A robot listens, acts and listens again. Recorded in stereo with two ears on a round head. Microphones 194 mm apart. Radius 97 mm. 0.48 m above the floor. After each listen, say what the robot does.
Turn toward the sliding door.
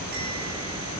Keep listening.
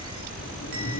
Keep listening.
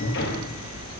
Turn 55° left.
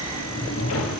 Turn 70° left.
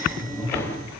Turn 15° left.
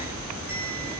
Keep listening.
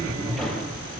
Found it: a sliding door, straight ahead.